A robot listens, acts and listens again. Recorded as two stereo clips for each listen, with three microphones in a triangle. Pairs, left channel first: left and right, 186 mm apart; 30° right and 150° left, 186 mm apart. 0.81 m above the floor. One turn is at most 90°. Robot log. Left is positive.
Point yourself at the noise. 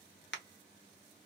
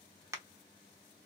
note: The crack: 80° left.
cmd yaw +80
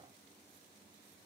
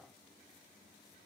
end: I heard a crack from this way, but can't make it out now.